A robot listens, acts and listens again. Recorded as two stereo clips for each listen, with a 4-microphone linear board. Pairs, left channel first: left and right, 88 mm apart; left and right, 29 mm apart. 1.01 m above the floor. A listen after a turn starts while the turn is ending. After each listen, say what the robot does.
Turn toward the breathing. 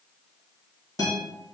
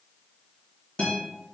Keep listening.
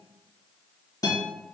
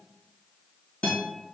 Keep listening.
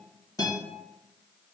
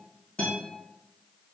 I can't make out breathing, only a guitar.